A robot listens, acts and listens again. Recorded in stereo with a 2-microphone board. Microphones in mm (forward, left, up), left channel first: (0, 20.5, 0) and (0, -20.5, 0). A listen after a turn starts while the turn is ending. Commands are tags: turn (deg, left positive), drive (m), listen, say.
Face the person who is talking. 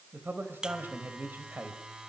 <turn deg="-55"/>
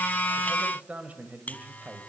<turn deg="-45"/>
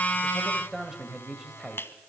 <turn deg="-20"/>
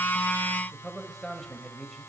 <say>Found it: a man speaking, straight ahead.</say>